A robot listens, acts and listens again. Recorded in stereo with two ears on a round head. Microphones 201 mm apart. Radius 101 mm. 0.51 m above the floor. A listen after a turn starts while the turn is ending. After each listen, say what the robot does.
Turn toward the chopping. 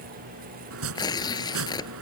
Turn 65° right.
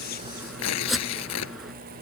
Found it: chopping, straight ahead.